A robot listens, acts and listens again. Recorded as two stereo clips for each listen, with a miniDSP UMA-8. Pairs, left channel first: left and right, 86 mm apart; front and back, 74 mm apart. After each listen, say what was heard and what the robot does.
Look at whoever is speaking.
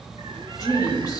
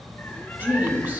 The woman speaking: 120° left. Turn 120° left.
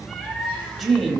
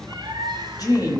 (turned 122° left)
Facing the woman speaking, 1 to 2 m away.